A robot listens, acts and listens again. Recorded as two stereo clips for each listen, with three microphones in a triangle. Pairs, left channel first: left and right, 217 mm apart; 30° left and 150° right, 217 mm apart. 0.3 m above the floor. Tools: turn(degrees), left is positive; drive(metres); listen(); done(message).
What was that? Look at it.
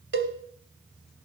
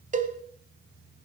turn(degrees=-100)
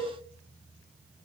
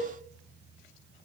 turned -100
listen()
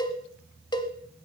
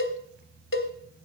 turn(degrees=20)
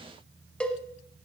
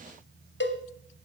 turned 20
done("Facing the cowbell, 1 to 2 m away.")